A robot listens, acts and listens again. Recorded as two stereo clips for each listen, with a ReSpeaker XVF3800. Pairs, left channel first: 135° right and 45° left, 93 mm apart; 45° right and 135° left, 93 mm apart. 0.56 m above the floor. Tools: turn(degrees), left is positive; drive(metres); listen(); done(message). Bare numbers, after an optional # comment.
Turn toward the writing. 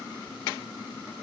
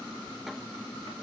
listen()
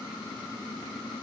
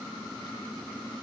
listen()
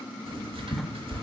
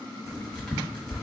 # The writing: 40° left.
turn(40)
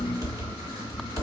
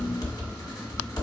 done("Facing the writing.")